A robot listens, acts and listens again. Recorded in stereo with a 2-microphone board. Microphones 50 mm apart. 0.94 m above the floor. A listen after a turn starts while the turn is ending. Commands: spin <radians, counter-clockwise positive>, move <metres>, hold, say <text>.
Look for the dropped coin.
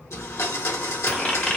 spin 0.26
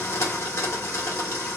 hold
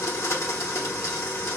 say I heard a dropped coin, but can't make it out now. It was about straight ahead or 150° left.